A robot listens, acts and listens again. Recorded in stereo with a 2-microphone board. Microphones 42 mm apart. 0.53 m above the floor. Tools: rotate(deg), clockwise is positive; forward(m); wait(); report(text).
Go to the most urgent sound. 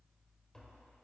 wait()
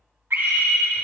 rotate(60)
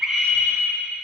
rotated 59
forward(1.0)
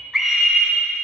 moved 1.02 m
forward(1.0)
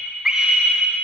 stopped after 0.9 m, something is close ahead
rotate(20)
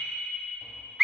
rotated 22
report("Arrived at the scream, straight ahead.")